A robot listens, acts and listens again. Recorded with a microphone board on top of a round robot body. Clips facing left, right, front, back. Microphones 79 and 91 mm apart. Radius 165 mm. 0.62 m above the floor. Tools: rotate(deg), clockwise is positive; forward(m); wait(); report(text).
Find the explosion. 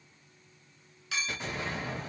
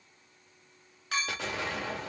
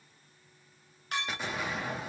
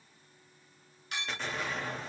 rotate(80)
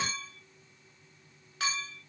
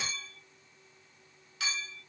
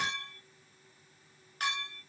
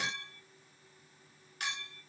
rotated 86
report("Facing where the explosion came from. I can't hear it now.")